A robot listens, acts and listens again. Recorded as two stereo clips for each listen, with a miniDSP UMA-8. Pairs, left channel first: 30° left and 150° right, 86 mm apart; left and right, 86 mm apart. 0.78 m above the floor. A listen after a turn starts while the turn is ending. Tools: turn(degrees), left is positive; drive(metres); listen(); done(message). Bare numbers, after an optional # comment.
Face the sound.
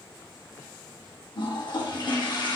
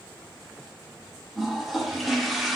done("Facing the toilet flushing.")